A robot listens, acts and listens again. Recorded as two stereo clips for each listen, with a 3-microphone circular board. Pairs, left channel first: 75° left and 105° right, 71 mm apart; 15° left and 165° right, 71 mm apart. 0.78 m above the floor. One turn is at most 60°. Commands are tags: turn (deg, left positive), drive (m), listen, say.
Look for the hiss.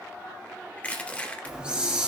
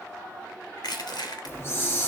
<turn deg="-35"/>
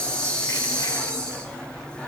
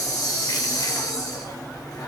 <say>Facing the hiss.</say>